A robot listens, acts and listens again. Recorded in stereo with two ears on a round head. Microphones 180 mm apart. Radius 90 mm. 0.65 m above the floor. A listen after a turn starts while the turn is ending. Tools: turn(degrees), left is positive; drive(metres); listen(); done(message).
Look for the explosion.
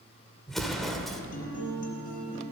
turn(degrees=30)
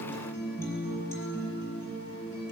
listen()
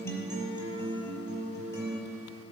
done("I heard an explosion, but can't make it out now. It was about 30° right or 150° left.")